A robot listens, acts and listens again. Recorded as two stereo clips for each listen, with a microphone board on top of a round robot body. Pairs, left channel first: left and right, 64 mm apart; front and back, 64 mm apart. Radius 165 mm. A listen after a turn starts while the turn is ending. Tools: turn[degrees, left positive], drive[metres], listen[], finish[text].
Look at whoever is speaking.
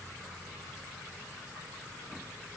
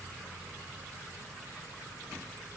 Action: listen[]
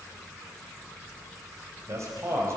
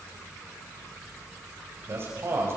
Thought: The man speaking: 135° right.
Action: turn[-135]
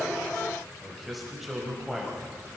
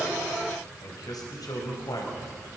Action: finish[Facing the man speaking.]